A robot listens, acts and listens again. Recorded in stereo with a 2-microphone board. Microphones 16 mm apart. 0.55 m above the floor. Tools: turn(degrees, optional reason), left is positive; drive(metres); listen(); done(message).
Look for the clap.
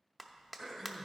turn(degrees=-30)
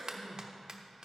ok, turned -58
turn(degrees=-110, reason="So it is at 110° right.")
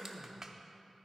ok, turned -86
turn(degrees=-25, reason="The clap is now 25° right.")
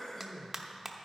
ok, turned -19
done("Facing the clap.")